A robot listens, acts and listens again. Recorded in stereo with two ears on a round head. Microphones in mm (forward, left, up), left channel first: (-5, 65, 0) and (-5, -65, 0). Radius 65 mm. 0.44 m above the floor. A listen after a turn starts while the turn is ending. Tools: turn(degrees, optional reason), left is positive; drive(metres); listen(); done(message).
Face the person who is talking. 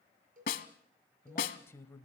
turn(degrees=20, reason="The man speaking: about 20° left or 160° left.")
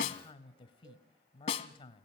turn(degrees=140, reason="So it is at 140° left.")
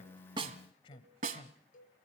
turn(degrees=40, reason="The man speaking is now 40° left.")
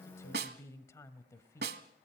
turn(degrees=20, reason="The man speaking is now 20° left.")
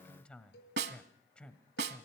turn(degrees=10, reason="The man speaking is now 10° left.")
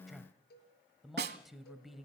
done("Found it: a man speaking, straight ahead, 1 to 2 m away.")